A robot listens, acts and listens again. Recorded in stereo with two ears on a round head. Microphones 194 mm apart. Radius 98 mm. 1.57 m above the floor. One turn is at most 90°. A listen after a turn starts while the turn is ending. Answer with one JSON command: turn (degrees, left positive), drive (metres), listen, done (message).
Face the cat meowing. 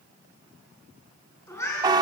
{"turn": 30}
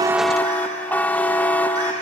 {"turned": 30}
{"listen": true}
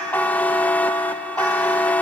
{"listen": true}
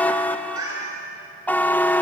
{"turn": -15}
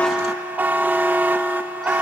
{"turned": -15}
{"listen": true}
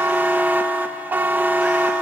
{"listen": true}
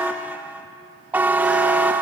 {"done": "Facing where the cat meowing came from. I can't hear it now."}